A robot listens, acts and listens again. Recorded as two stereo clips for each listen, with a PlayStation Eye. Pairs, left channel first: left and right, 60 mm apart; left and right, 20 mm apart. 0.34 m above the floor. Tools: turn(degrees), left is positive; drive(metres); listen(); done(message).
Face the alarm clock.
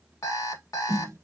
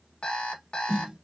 turn(degrees=90)
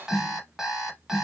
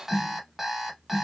turn(degrees=-10)
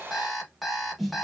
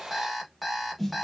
done("Found it: an alarm clock, straight ahead, 1 to 2 m away.")